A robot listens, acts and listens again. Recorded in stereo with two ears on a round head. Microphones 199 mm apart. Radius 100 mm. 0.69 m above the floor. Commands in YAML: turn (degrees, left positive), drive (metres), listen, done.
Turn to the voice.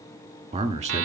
turn: -30
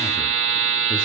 listen: true
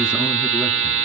listen: true
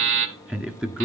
done: "Found it: a man speaking, straight ahead."